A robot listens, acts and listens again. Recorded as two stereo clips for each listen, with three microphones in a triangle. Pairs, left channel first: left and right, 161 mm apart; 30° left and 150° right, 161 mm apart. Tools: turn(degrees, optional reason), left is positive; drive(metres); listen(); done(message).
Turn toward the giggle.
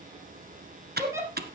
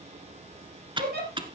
turn(degrees=-160, reason="The giggle: 160° right.")
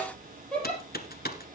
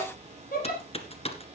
done("Facing the giggle, over 4 m away.")